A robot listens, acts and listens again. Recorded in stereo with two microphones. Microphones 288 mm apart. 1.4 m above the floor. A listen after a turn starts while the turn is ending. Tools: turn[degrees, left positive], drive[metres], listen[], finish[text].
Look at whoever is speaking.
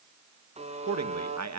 Thought: The man speaking: about 65° right or 115° right.
Action: turn[-65]
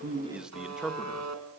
Action: finish[Facing the man speaking.]